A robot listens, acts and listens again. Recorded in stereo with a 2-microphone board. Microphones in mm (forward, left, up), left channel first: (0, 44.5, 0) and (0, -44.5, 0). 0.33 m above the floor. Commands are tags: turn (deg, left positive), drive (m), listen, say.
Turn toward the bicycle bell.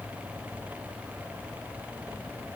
<listen/>
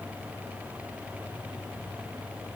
<listen/>
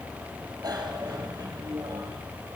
<turn deg="-45"/>
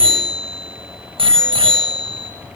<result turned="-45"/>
<turn deg="-90"/>
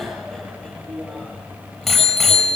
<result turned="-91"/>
<say>Facing the bicycle bell, over 4 m away.</say>